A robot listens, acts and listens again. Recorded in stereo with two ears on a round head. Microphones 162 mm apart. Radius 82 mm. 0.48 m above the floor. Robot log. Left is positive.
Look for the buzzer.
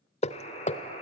note: The buzzer: about 35° left or 145° left.
cmd yaw +35
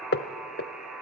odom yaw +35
end: Facing the buzzer.